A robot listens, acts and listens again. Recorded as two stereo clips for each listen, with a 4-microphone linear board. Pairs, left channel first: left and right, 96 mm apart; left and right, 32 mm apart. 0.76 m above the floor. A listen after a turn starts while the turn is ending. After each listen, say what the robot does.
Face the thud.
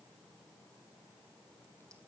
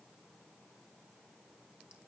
Keep listening.
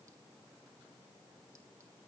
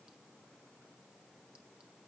Keep listening.
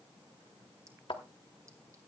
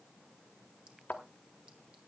Turn 60° left.
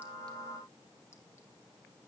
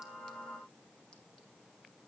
Keep listening.
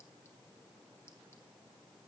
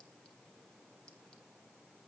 I heard a thud, but can't make it out now. It was about straight ahead or 60° left.